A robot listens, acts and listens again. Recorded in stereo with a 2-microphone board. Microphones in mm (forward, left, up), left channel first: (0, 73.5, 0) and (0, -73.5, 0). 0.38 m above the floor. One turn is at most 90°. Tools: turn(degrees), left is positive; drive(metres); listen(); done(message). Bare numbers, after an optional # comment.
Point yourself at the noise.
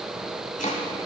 # The chopping: about 55° left or 125° left.
turn(55)
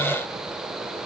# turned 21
listen()
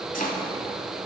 # So it is at 95° left.
turn(90)
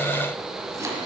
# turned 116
# The chopping is now 20° right.
turn(-20)
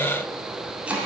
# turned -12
# The chopping is now 10° right.
turn(-10)
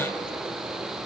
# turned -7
listen()
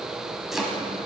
done("Found it: chopping, straight ahead, 1 to 2 m away.")